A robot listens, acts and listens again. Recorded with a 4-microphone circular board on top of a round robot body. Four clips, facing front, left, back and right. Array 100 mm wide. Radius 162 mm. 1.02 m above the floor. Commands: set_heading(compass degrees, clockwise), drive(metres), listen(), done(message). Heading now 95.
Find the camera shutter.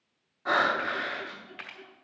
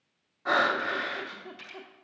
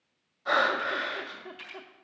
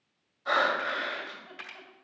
set_heading(125)
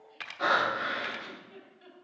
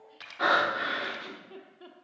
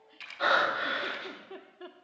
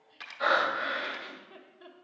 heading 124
done("Found it: a camera shutter, straight ahead, 1 to 2 m away.")